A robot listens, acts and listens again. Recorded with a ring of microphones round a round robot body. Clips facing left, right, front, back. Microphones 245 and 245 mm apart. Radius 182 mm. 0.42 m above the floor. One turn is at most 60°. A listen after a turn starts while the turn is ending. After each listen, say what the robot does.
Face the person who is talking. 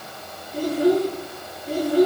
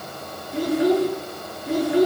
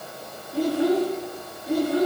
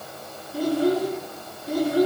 Turn 60° right.
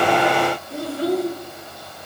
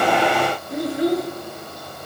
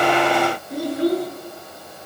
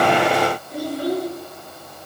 Turn 15° right.
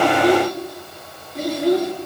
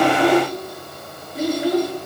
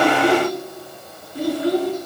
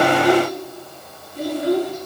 Facing the child speaking, over 4 m away.